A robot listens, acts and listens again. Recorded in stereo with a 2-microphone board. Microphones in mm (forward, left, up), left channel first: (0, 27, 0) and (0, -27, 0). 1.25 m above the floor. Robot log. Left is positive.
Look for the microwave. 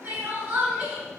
cmd idle
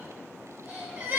cmd idle
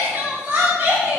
end: I can't make out a microwave to turn to.